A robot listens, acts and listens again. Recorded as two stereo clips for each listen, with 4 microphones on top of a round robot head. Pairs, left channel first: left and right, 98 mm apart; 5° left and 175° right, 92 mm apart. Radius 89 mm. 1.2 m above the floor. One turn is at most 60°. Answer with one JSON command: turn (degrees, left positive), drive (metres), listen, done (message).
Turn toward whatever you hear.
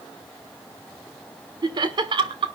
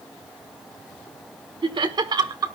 {"turn": -60}
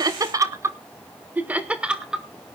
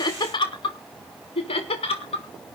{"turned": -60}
{"done": "Found it: laughter, straight ahead, 1 to 2 m away."}